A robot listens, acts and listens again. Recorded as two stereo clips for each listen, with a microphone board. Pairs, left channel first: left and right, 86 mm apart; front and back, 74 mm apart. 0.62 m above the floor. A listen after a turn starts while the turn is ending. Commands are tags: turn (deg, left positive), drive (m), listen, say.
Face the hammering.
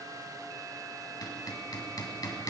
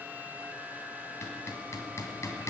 <turn deg="50"/>
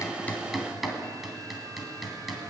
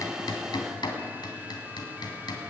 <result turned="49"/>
<say>Found it: hammering, straight ahead.</say>